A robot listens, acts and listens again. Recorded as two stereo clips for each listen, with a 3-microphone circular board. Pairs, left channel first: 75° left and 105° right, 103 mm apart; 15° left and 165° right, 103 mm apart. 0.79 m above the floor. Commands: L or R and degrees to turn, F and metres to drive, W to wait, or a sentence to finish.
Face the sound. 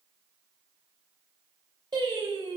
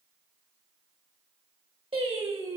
R150
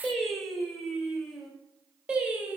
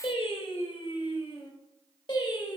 R30
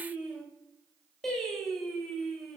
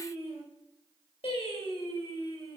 R10
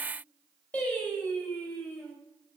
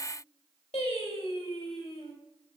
Found it: singing, straight ahead.